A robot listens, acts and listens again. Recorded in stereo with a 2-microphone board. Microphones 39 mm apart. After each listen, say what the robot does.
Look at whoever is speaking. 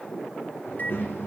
Turn 65° left.
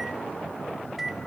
Keep listening.
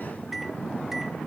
Turn 45° left.
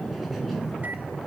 Found it: a child speaking, straight ahead, over 4 m away.